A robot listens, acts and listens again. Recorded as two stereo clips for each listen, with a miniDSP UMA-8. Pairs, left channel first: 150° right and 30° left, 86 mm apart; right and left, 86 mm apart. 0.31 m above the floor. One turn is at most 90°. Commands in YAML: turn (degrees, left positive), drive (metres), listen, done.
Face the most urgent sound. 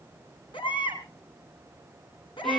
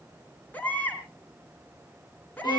turn: -90
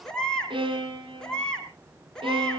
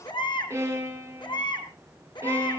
turn: -70
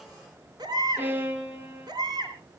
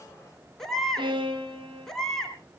done: "Found it: a baby crying, straight ahead, 2 to 4 m away."